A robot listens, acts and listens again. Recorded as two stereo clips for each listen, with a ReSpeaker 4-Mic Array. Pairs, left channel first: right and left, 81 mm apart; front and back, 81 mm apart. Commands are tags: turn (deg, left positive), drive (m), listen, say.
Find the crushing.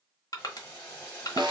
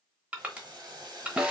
<turn deg="-110"/>
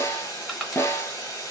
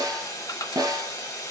<listen/>
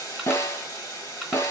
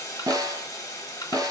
<listen/>
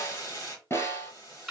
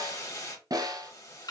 <say>Found it: crushing, straight ahead.</say>